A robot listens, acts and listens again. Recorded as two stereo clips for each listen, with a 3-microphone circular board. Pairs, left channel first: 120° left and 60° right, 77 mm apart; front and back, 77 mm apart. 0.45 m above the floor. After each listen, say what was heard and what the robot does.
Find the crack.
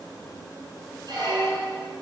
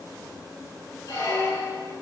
Keep listening.
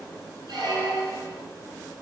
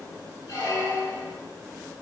Keep listening.
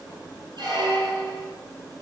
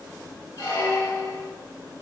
I can't make out a crack, only a squeak.